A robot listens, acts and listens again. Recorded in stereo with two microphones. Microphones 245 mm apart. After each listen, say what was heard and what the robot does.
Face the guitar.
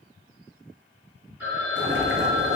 Keep listening.
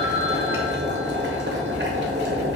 Keep listening.
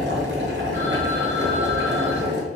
I can't make out a guitar, only boiling and a phone ringing.